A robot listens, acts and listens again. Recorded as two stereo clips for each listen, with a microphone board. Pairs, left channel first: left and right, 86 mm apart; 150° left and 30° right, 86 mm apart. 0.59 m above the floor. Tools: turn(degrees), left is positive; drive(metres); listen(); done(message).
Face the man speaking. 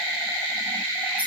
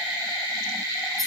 listen()
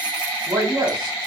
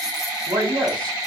turn(degrees=-65)
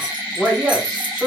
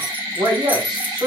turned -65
done("Found it: a man speaking, straight ahead, 2 to 4 m away.")